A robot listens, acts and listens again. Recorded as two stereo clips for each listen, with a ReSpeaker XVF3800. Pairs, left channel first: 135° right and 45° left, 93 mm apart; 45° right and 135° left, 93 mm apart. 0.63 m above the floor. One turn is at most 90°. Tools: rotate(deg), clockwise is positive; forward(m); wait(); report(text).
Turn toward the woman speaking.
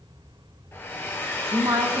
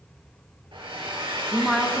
rotate(-45)
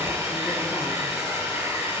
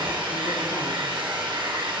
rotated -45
wait()
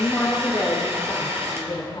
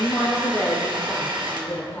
rotate(90)
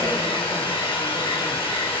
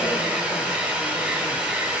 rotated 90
rotate(10)
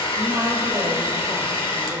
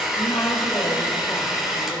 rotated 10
wait()
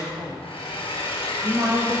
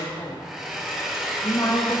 rotate(-10)
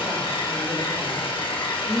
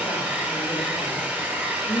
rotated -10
report("Facing the woman speaking.")